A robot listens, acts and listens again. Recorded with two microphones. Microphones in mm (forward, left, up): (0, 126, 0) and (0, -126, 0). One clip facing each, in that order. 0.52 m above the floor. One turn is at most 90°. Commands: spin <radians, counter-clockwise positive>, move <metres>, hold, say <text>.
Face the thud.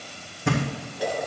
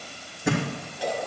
spin -0.52
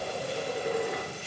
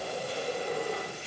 hold
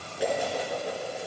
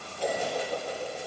say I heard a thud, but can't make it out now. It was about 25° left or 145° right.